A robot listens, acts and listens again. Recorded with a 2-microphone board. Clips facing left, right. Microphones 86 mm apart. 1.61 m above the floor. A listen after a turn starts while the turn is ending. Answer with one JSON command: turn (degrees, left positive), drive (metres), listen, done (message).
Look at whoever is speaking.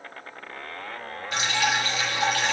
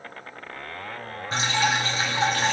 {"listen": true}
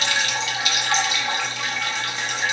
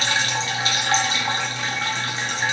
{"listen": true}
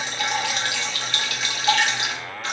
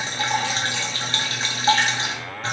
{"done": "I can't make out anyone speaking to turn to."}